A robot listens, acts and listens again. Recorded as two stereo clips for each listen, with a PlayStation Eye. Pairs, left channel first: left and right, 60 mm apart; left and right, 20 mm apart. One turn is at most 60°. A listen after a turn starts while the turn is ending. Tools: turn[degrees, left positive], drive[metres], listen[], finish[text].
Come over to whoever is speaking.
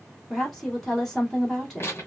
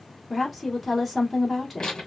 Action: turn[30]
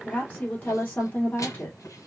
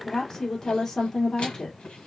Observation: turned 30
Thought: So it is at 145° left.
Action: turn[60]
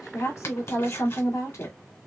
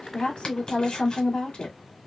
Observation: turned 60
Thought: The woman speaking is now 80° left.
Action: turn[60]
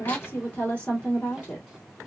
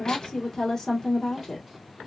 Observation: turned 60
Thought: The woman speaking is now 25° left.
Action: turn[25]
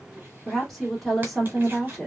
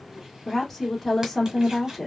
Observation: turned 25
Action: drive[1.0]
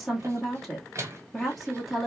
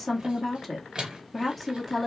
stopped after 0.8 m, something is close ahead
Action: finish[I am next to the woman speaking.]